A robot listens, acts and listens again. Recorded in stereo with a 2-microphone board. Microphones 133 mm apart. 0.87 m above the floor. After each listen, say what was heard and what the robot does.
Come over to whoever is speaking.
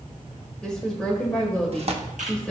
Turn 30° left.
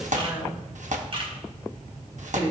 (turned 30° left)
So it is at 25° right. Turn 25° right.
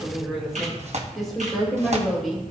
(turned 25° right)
Drive 1.0 m forward.
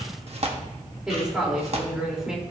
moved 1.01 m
Drive 1.0 m forward.
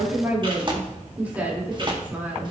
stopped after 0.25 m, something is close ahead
The woman speaking is now 10° right. Turn 10° right.
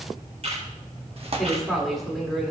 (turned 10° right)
Something is in my way. I am facing the woman speaking but have not reached it.